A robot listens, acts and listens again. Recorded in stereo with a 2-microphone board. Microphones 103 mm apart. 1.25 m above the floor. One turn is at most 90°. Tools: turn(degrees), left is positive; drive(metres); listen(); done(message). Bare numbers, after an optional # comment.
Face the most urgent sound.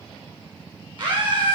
# The scream: about 50° right or 130° right.
turn(-50)
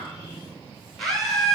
done("Found it: a scream, straight ahead, over 4 m away.")